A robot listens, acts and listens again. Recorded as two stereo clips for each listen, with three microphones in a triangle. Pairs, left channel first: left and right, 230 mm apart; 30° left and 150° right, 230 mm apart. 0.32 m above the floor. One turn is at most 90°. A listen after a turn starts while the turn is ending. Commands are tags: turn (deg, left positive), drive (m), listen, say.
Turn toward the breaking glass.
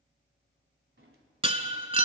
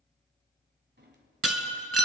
<turn deg="-90"/>
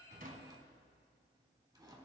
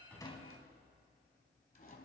<turn deg="-65"/>
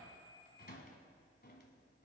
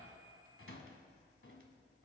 <say>I heard breaking glass from this way, but can't make it out now.</say>